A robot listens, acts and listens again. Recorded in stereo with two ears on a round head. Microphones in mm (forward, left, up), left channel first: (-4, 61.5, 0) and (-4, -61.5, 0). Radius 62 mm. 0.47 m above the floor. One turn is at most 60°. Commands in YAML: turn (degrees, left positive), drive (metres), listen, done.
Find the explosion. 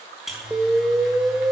turn: -30
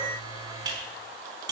listen: true
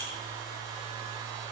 done: "I heard an explosion, but can't make it out now. It was about 20° left or 140° right."